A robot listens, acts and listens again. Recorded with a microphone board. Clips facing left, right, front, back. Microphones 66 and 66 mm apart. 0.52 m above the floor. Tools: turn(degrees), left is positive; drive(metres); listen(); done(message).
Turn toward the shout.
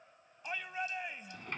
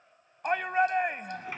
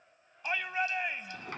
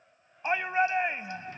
turn(degrees=-120)
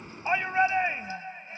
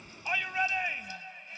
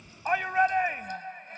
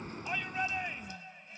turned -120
turn(degrees=30)
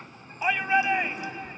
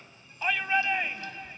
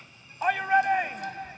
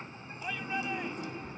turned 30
turn(degrees=15)
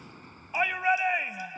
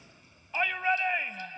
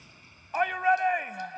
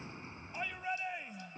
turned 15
turn(degrees=10)
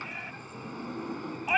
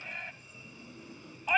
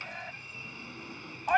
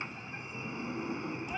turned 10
done("Found it: a shout, straight ahead.")